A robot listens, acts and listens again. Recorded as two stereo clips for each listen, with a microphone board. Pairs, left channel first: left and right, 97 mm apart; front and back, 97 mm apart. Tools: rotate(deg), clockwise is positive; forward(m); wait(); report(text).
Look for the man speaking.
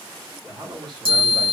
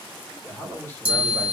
rotate(65)
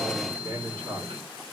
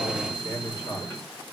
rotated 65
rotate(45)
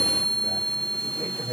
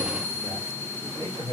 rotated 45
rotate(30)
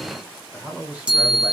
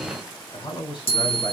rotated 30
rotate(15)
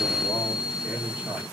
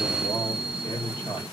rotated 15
report("Found it: a man speaking, straight ahead, 2 to 4 m away.")